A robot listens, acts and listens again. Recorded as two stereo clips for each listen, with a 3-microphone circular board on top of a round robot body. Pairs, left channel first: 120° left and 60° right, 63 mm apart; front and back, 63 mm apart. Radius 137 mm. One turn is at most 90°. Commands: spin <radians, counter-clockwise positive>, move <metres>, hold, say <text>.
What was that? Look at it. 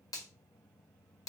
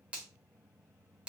spin 1.57
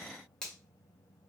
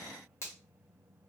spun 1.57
spin 0.79
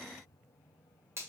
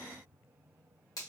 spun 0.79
spin -0.26
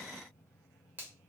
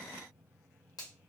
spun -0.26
say Found it: a finger snap, straight ahead.